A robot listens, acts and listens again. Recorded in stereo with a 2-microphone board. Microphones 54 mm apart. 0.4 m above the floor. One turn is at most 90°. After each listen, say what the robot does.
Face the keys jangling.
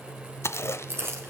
Turn 50° right.
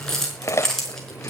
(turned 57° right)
Turn 10° left.
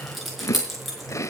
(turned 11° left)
Found it: keys jangling, straight ahead.